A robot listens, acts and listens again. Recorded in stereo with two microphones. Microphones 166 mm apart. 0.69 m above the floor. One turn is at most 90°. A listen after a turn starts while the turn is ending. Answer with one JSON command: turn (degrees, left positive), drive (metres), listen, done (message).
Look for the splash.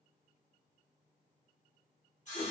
{"listen": true}
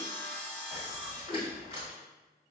{"turn": -40}
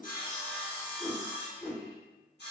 {"listen": true}
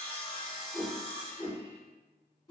{"done": "I heard a splash, but can't make it out now. It was about straight ahead or 100° right."}